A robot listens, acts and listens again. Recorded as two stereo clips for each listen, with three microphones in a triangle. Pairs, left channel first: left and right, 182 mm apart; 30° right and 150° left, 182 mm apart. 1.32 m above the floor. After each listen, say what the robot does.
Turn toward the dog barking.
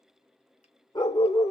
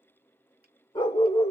Turn 20° left.
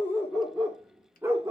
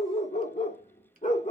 Turn 25° right.
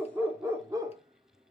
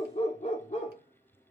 Turn 35° right.
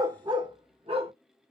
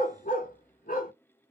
Turn 45° right.
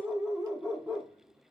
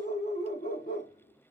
Turn 15° right.
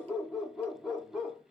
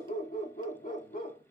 Found it: a dog barking, straight ahead, 1 to 2 m away.